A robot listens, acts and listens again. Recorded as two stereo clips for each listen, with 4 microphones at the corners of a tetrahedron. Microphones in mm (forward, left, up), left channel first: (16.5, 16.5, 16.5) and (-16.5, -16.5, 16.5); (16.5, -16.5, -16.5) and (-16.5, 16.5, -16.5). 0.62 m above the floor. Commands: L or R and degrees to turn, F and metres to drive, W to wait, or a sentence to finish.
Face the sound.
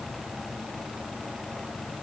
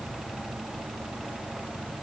W
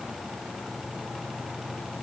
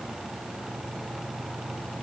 W
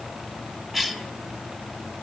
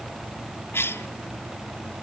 R50
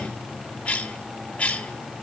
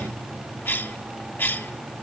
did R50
R15
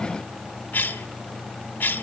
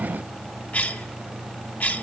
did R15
Found it: a cough, straight ahead, 2 to 4 m away.